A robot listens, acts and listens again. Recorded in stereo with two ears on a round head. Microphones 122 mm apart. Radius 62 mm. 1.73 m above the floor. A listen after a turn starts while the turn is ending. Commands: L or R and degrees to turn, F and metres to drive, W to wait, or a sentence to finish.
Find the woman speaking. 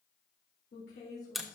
L90
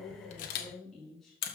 Facing the woman speaking.